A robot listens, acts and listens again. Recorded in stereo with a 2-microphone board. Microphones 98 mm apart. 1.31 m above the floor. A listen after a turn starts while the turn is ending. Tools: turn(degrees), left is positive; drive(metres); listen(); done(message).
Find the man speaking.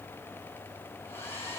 listen()
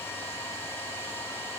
listen()
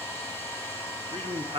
turn(degrees=-90)
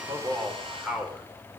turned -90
done("Facing the man speaking, over 4 m away.")